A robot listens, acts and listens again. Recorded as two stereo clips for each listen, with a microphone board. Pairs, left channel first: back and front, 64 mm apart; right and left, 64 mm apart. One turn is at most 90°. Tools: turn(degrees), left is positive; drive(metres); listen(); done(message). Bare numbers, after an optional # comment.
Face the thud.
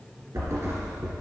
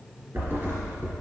# The thud: 35° left.
turn(35)
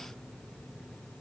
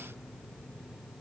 done("I heard a thud from this way, but can't make it out now.")